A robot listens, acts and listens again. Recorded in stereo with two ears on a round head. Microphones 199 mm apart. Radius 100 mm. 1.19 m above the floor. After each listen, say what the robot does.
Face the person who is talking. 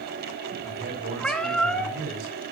Turn 50° right.
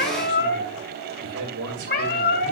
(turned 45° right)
Turn 75° right.
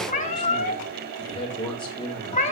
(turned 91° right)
Turn 25° left.
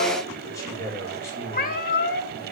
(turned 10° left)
Turn 15° left.
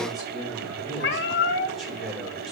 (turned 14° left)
Found it: a man speaking, straight ahead, over 4 m away.